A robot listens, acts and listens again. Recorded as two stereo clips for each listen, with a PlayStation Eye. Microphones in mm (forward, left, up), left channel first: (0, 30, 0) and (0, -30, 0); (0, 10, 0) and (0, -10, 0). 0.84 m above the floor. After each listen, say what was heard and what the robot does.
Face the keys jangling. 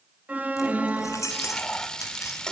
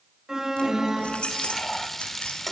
The keys jangling: about 60° left or 120° left. Turn 60° left.
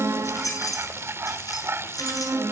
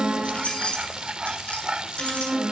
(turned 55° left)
So it is at 70° left. Turn 70° left.
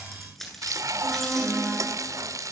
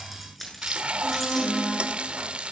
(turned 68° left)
Found it: keys jangling, straight ahead.